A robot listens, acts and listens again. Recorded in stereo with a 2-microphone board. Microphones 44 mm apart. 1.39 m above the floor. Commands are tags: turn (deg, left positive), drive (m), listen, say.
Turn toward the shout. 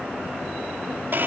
<listen/>
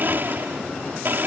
<listen/>
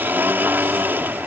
<say>I can't make out a shout, only a blender.</say>